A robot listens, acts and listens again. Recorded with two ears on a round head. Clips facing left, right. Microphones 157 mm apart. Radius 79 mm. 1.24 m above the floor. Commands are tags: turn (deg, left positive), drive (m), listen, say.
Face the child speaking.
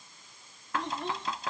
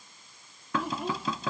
<turn deg="-30"/>
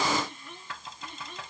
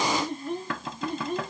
<turn deg="-145"/>
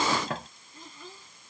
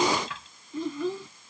<turn deg="-55"/>
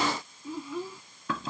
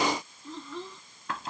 <turn deg="10"/>
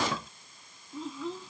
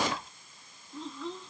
<say>Found it: a child speaking, straight ahead.</say>